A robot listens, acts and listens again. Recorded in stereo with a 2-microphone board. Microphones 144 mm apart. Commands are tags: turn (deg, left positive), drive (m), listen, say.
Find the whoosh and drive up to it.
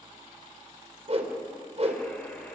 <turn deg="-50"/>
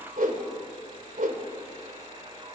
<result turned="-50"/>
<turn deg="-80"/>
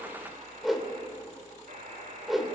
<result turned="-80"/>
<drive m="1.0"/>
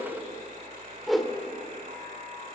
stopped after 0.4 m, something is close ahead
<say>Something is in my way. I am facing the whoosh but have not reached it.</say>